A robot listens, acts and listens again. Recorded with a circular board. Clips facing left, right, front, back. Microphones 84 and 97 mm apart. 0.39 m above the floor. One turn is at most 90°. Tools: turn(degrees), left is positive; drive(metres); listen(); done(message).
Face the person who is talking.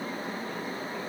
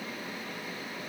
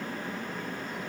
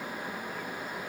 listen()
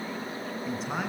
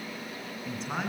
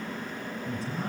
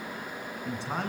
turn(degrees=90)
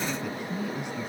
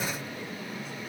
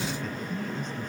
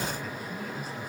turn(degrees=90)
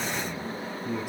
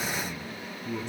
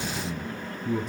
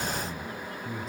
turn(degrees=10)
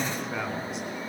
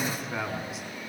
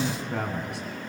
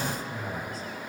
done("Facing the man speaking, 2 to 4 m away.")